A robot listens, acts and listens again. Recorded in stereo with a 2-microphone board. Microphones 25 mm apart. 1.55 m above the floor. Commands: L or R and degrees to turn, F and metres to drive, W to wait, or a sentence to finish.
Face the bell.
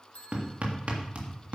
L70
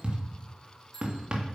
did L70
L15
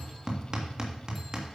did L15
W
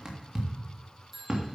Found it: a bell, straight ahead, 2 to 4 m away.